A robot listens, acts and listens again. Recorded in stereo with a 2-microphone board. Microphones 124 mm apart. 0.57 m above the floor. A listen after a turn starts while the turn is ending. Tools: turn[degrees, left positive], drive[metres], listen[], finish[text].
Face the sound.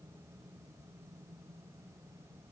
Action: listen[]
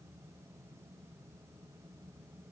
Action: listen[]
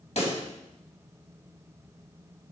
Thought: The pop: about 60° left or 120° left.
Action: turn[60]
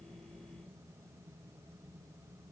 Action: listen[]
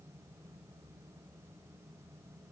Action: finish[I heard a pop, but can't make it out now. It was about straight ahead or 60° left.]